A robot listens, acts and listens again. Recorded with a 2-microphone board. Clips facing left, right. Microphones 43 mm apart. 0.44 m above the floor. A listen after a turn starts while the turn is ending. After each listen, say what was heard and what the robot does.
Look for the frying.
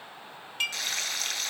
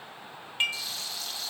The frying: about 75° left or 105° left. Turn 75° left.
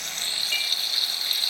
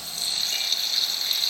Facing the frying.